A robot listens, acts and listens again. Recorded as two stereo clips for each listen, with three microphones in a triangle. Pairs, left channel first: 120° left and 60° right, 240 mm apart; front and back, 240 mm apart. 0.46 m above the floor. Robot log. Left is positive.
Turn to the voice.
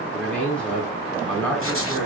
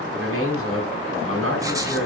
note: The man speaking: 155° right.
cmd yaw -155
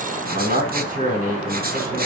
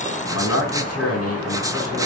end: Found it: a man speaking, straight ahead.